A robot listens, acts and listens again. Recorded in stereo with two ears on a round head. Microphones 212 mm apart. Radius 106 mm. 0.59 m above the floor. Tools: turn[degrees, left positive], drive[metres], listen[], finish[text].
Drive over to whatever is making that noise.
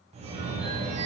Thought: The phone ringing: about 30° right or 150° right.
Action: turn[-30]
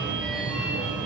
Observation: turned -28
Action: drive[1.0]
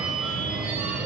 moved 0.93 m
Action: drive[1.0]
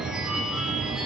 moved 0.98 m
Action: drive[1.0]
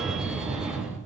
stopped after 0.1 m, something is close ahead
Action: finish[I am next to the phone ringing.]